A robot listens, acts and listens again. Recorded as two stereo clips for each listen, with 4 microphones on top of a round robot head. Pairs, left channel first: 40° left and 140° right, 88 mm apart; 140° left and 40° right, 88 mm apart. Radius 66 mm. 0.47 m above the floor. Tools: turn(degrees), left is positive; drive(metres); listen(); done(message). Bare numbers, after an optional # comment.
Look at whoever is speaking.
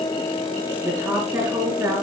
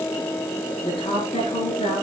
# The woman speaking: 160° left.
turn(160)
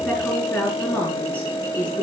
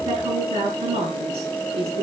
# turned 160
# The woman speaking is now 30° right.
turn(-30)
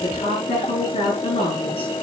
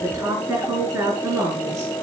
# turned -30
# The woman speaking is now 25° left.
turn(25)
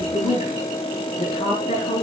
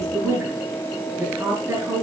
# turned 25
# The woman speaking is now 25° left.
turn(25)
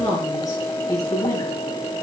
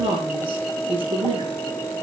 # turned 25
# The woman speaking is now 10° right.
turn(-10)
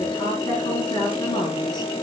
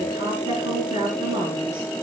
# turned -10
done("Facing the woman speaking, over 4 m away.")